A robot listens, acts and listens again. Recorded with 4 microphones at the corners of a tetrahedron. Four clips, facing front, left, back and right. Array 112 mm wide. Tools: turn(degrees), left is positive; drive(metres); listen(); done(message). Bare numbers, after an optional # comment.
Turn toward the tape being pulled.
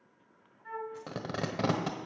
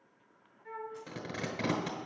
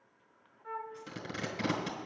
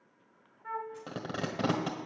# The tape being pulled: 35° right.
turn(-35)
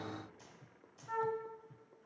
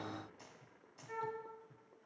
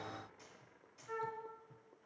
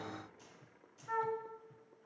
listen()
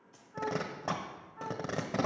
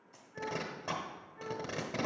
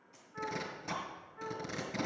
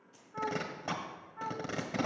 done("Found it: tape being pulled, straight ahead, 1 to 2 m away.")